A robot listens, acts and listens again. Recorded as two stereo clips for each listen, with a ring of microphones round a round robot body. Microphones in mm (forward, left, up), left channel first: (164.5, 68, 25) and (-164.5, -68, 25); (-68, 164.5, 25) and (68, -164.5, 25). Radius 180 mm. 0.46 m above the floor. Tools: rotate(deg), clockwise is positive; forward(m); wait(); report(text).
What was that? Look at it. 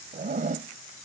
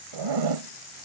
rotate(90)
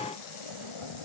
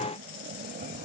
report("Found it: a zipper, straight ahead.")